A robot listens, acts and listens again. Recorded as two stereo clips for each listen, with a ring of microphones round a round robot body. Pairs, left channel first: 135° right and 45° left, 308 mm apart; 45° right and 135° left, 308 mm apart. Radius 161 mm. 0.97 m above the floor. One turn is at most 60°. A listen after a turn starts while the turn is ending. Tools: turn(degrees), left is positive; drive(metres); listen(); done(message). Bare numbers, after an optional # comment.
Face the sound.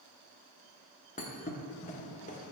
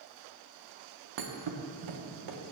# The thud: 160° left.
turn(60)
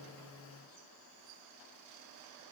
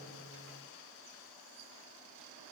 # Nothing new. It was at 100° left.
turn(60)
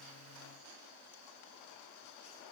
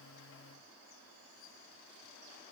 # Nothing new. It was at 40° left.
turn(40)
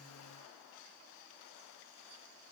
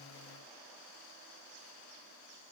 done("I heard a thud from this way, but can't make it out now.")